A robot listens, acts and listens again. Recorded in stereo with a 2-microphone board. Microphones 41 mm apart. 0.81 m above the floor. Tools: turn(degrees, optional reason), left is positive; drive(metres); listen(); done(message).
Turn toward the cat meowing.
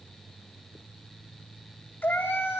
turn(degrees=55, reason="The cat meowing: about 55° left or 125° left.")
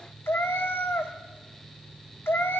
turn(degrees=70, reason="So it is at 70° left.")
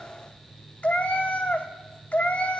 turn(degrees=40, reason="The cat meowing is now 40° left.")
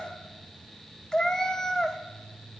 turn(degrees=15, reason="The cat meowing is now 15° left.")
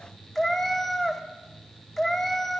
turn(degrees=10, reason="The cat meowing is now 10° left.")
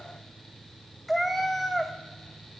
done("Found it: a cat meowing, straight ahead, under 1 m away.")